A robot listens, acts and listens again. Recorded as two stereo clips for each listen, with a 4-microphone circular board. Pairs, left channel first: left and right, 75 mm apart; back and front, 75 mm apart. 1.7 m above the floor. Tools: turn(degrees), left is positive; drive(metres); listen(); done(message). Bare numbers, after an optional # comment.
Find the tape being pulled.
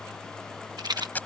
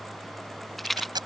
# The tape being pulled: 20° left.
turn(20)
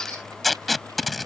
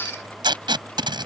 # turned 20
done("Facing the tape being pulled.")